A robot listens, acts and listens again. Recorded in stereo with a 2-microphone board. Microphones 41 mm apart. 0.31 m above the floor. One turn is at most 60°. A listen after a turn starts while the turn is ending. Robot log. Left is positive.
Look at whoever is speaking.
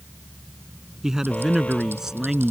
cmd yaw -30
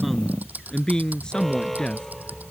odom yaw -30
note: So it is at 20° left.
cmd yaw +20
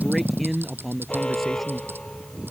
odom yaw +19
end: Found it: a man speaking, straight ahead.